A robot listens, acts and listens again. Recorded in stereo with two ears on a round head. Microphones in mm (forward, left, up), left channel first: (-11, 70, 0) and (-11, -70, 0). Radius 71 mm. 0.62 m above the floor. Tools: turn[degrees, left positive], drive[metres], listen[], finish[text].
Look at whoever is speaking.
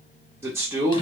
Thought: The man speaking: about 15° right or 165° right.
Action: turn[-15]
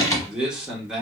Action: finish[Facing the man speaking, 1 to 2 m away.]